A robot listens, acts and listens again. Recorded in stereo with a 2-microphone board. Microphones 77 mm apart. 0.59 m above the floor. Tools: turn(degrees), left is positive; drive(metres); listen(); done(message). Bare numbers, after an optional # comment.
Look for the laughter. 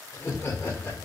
# The laughter: about 30° left or 150° left.
turn(30)
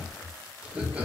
# So it is at 20° right.
turn(-20)
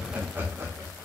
# The laughter is now 30° right.
turn(-30)
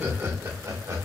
# The laughter is now 45° right.
turn(-45)
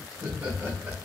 # The laughter is now 20° right.
turn(-20)
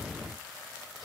listen()
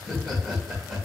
done("Facing the laughter, 2 to 4 m away.")